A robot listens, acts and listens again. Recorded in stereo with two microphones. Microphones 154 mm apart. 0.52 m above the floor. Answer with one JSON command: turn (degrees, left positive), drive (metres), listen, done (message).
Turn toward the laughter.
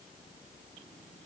{"listen": true}
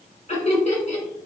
{"turn": 45}
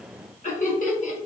{"turn": 75}
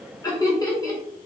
{"turn": 25}
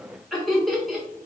{"done": "Facing the laughter, 1 to 2 m away."}